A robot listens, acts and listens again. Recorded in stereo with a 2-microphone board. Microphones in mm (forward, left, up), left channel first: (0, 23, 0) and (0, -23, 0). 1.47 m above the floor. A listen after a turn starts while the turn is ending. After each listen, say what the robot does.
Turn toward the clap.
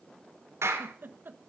Turn 90° right.
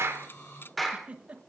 Found it: a clap, straight ahead, 2 to 4 m away.